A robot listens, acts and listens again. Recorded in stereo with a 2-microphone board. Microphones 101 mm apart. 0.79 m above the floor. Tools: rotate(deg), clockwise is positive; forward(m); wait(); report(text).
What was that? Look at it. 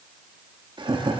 rotate(50)
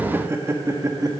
rotate(35)
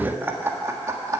rotate(30)
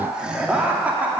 rotate(15)
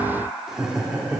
rotate(10)
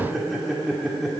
report("Facing the laughter, 2 to 4 m away.")